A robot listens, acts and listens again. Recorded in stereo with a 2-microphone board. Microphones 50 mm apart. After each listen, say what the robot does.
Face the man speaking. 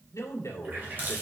Turn 70° left.
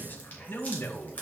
Turn 50° left.
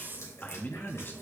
Turn 45° left.
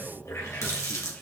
Turn 25° left.
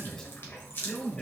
Turn 15° left.
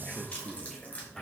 Facing the man speaking.